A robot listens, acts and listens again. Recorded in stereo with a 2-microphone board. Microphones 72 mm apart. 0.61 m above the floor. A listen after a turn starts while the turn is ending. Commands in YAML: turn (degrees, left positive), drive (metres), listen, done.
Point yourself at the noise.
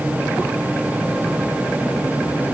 listen: true
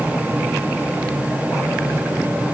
listen: true
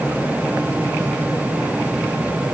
done: "I can't make out anything."